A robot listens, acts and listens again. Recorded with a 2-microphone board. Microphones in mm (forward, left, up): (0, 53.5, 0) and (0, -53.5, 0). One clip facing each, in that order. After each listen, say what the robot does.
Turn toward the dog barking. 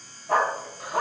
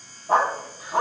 Turn 25° right.
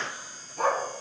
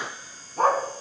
Turn 135° right.
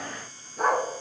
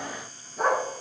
Facing the dog barking.